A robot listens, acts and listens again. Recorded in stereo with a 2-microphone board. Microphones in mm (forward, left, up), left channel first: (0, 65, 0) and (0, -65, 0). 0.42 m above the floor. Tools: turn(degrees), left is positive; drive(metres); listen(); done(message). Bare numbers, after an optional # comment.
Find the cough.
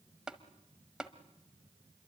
listen()
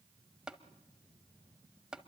listen()
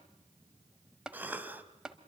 turn(-30)
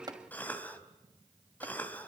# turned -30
# So it is at 15° left.
turn(15)
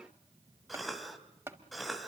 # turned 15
done("Facing the cough.")